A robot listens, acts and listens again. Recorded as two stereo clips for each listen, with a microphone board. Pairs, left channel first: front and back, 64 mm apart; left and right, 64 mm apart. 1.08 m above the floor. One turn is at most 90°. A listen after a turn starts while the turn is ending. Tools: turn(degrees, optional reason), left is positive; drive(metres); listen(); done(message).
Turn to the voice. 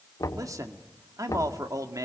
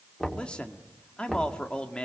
turn(degrees=90, reason="The man speaking: 165° left.")
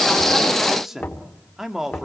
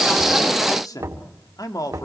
turn(degrees=90, reason="The man speaking is now 95° left.")
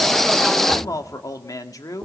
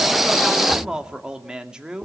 turn(degrees=-15, reason="The man speaking is now 15° right.")
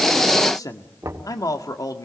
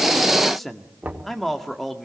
done("Facing the man speaking, 1 to 2 m away.")